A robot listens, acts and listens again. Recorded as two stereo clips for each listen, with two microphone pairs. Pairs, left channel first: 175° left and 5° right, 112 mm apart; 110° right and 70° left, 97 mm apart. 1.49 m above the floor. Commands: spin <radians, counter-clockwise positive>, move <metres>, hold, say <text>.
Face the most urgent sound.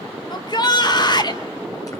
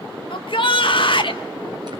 spin -2.36
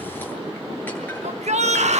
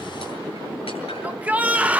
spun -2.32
say Facing the shout.